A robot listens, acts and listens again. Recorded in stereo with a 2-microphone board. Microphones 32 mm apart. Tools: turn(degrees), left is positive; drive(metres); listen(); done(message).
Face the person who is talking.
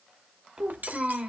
turn(degrees=-25)
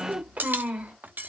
turn(degrees=-130)
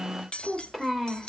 done("Found it: a child speaking, straight ahead.")